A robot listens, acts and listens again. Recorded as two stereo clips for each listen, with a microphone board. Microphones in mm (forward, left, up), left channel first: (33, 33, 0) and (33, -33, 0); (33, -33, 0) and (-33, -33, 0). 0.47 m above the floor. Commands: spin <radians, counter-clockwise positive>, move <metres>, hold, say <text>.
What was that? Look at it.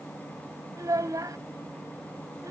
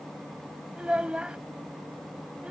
spin -1.83
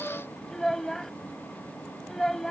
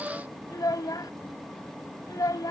say Found it: a child speaking, straight ahead.